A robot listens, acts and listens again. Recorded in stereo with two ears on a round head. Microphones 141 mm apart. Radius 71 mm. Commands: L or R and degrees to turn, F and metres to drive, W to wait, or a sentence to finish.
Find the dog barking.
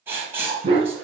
R35
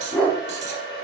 L10
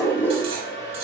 L15
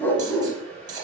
L15
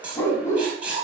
L20
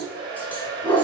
L10
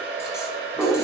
Found it: a dog barking, straight ahead, 1 to 2 m away.